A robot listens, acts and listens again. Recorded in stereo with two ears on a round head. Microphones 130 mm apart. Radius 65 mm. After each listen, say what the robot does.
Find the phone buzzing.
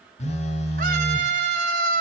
Turn 45° left.
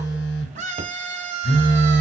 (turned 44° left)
Turn 90° left.
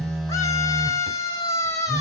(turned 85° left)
Facing the phone buzzing, under 1 m away.